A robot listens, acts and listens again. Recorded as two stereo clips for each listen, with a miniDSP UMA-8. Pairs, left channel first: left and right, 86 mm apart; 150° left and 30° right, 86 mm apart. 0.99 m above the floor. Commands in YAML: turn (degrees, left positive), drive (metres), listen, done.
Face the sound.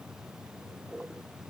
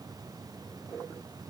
listen: true
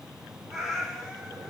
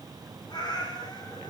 turn: 180
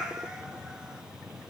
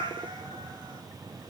turn: -10
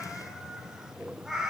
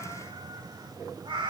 done: "Found it: a cat meowing, straight ahead."